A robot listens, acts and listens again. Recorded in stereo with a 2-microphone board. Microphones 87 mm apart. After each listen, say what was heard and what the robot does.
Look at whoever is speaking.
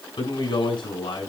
The man speaking: about 65° left or 115° left. Turn 65° left.
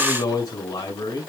So it is at 45° left. Turn 45° left.
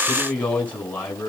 The man speaking is now 15° left. Turn 15° left.
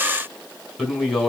Facing the man speaking.